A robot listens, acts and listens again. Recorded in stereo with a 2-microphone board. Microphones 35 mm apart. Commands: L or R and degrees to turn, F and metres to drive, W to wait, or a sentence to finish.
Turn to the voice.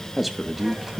R30
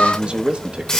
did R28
R145
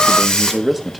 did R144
Found it: a man speaking, straight ahead, 1 to 2 m away.